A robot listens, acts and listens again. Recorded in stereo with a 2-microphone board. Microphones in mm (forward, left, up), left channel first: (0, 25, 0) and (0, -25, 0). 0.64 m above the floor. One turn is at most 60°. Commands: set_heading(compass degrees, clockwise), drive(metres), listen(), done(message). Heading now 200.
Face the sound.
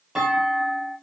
set_heading(230)
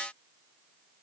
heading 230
listen()
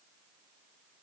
done("I heard a clunk, but can't make it out now. It was about 15° left or 135° right.")